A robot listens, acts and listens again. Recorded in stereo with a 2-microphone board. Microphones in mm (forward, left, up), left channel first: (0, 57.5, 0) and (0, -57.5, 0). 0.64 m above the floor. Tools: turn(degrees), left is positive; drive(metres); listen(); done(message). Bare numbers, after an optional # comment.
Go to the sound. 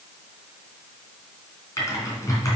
# The typing on a keyboard: about 30° left or 150° left.
turn(30)
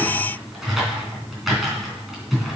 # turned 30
drive(1.0)
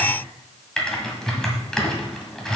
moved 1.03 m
drive(1.0)
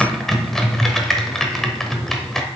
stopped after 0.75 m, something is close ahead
done("Arrived at the typing on a keyboard, straight ahead.")